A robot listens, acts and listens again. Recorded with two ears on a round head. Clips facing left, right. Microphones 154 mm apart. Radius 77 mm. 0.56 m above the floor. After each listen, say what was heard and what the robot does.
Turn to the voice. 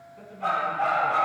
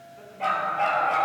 Turn 30° left.
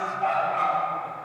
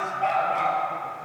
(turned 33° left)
Keep listening.
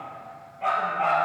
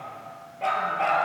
Keep listening.
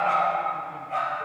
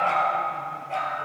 I heard a man speaking, but can't make it out now. It was about 25° right or 140° left.